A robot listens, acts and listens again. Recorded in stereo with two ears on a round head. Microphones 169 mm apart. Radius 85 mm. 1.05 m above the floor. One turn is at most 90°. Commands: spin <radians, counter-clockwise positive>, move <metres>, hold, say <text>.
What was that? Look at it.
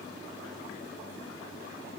hold
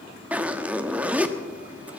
spin -0.52
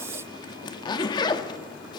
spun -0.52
spin 0.44
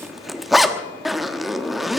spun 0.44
say Found it: a zipper, straight ahead, 1 to 2 m away.